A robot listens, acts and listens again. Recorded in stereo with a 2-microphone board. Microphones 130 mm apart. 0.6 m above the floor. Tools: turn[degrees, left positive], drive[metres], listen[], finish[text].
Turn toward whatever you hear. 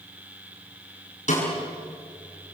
Thought: The snare drum: about 65° left or 115° left.
Action: turn[65]
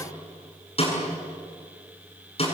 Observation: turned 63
Thought: So it is at 50° left.
Action: turn[50]
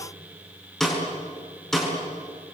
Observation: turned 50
Action: finish[Facing the snare drum, over 4 m away.]